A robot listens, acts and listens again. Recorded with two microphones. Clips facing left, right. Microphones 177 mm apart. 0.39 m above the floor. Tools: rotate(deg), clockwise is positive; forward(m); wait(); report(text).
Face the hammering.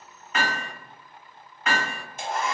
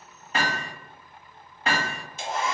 rotate(35)
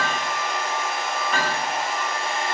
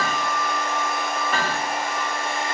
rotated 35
report("Facing the hammering.")